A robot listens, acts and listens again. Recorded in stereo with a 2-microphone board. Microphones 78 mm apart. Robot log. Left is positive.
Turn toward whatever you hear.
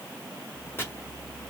note: The chopping: about 30° left or 150° left.
cmd yaw +30
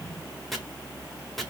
end: Facing the chopping.